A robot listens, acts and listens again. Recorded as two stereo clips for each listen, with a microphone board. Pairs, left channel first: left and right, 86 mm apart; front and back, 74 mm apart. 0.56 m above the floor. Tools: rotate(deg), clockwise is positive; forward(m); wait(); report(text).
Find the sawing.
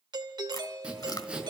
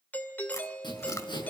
rotate(15)
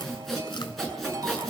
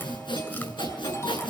report("Facing the sawing, over 4 m away.")